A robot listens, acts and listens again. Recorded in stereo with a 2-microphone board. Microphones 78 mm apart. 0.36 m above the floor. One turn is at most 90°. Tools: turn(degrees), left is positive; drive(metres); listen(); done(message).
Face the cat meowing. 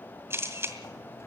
listen()
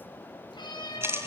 turn(degrees=75)
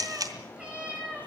turn(degrees=-15)
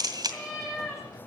done("Found it: a cat meowing, straight ahead, over 4 m away.")